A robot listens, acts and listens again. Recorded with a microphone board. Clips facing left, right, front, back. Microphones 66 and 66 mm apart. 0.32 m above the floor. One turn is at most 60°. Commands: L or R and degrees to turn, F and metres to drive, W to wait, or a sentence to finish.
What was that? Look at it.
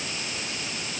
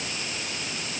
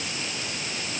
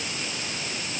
W
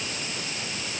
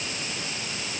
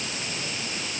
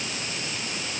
W
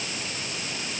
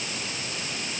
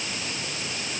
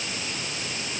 I can't make out anything to turn to.